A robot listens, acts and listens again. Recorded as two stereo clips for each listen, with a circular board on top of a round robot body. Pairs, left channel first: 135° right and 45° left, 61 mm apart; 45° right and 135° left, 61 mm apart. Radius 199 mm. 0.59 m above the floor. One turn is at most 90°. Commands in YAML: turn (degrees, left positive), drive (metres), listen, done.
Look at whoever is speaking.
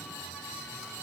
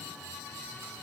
listen: true
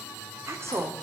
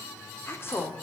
done: "Facing the woman speaking."